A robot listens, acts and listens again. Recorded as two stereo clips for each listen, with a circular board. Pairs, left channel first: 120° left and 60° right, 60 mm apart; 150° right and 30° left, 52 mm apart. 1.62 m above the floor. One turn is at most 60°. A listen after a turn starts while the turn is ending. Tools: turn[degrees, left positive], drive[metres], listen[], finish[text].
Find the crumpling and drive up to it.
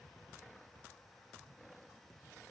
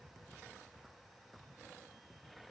Action: listen[]
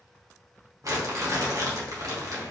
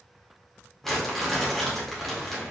Thought: The crumpling: 65° right.
Action: turn[-60]
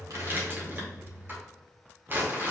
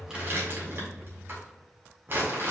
Thought: The crumpling is now 10° right.
Action: turn[-10]
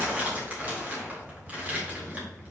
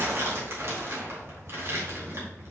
Action: drive[1.0]
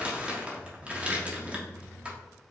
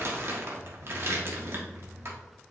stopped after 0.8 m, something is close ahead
Action: finish[I am next to the crumpling.]